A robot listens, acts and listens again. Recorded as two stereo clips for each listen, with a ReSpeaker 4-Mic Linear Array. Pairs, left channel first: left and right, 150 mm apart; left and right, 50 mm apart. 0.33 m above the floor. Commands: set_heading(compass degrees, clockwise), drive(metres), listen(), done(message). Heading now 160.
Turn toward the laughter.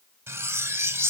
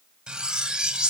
listen()
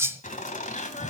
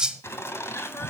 set_heading(105)
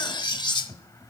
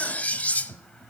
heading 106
set_heading(86)
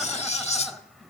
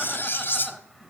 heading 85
done("Facing the laughter.")